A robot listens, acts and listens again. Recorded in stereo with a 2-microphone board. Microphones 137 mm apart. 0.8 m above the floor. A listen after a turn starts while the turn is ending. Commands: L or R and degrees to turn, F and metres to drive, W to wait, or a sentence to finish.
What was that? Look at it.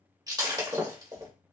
R30
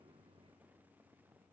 W
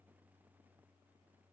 I heard breaking glass, but can't make it out now. It was about straight ahead or 120° right.